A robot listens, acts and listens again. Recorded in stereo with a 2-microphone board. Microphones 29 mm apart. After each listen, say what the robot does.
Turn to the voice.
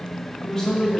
Turn 25° left.
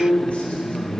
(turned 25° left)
Turn 120° left.
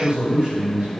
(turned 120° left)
Turn 35° right.
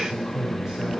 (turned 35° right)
Turn 15° right.
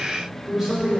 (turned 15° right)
Turn 10° right.
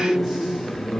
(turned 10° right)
Found it: a man speaking, straight ahead.